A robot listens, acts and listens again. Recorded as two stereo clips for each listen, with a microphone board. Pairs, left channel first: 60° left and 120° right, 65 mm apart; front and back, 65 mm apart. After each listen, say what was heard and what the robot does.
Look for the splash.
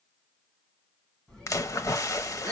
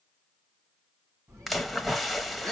The splash: 90° left. Turn 90° left.
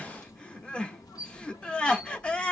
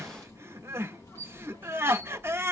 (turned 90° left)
Facing where the splash came from. I can't hear it now.